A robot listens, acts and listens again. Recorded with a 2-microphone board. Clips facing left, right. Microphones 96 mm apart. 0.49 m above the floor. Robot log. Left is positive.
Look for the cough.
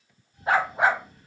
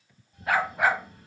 note: The cough: about 65° right or 115° right.
cmd yaw -65
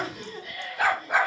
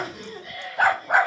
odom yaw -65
note: So it is at 30° right.
cmd yaw -30
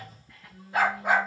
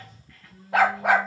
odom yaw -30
note: The cough is now 10° left.
cmd yaw +10
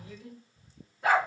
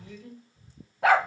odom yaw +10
end: Facing the cough, 2 to 4 m away.